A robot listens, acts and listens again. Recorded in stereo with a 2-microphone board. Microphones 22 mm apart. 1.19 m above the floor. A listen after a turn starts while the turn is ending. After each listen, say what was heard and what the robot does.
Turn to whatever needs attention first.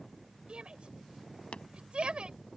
The shout: about 55° right or 125° right. Turn 55° right.
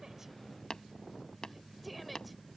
Found it: a shout, straight ahead.